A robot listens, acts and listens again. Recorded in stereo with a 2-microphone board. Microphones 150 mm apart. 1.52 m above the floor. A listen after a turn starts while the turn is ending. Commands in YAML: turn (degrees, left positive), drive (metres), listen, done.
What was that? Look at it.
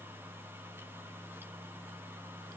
listen: true
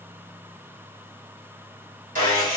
turn: -65
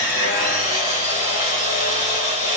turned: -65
turn: -50
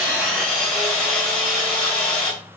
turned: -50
done: "Facing the sawing, 1 to 2 m away."